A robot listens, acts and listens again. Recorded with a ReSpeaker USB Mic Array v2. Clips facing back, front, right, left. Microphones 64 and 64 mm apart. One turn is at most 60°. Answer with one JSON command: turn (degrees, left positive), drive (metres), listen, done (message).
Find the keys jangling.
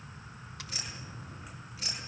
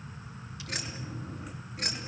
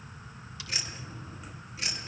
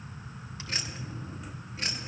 {"turn": 40}
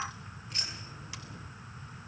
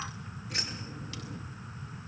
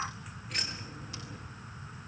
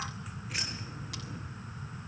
{"done": "Facing the keys jangling, over 4 m away."}